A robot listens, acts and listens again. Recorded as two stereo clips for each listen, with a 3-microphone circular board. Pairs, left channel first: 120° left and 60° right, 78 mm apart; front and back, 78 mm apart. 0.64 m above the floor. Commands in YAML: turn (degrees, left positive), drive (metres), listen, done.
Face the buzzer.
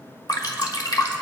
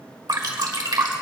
listen: true
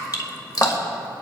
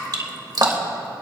listen: true
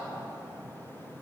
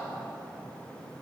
done: "I can't make out a buzzer to turn to."